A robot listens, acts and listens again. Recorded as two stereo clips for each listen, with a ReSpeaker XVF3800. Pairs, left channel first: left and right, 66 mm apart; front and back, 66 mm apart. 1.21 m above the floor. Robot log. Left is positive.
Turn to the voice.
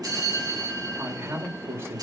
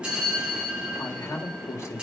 note: The man speaking: 40° right.
cmd yaw -40
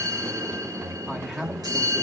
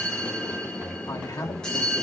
note: The man speaking is now 10° right.
cmd yaw -10
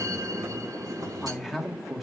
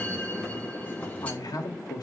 end: Facing the man speaking.